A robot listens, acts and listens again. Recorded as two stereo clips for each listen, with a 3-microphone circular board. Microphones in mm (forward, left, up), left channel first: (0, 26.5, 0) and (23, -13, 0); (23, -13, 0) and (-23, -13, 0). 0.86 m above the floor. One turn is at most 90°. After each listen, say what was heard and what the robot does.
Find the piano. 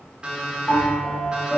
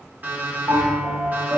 The piano: straight behind. Turn 90° left.
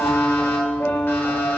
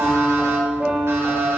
The piano is now 110° left. Turn 90° left.
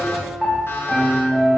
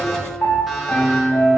The piano is now 40° left. Turn 40° left.
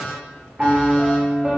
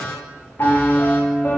Found it: a piano, straight ahead.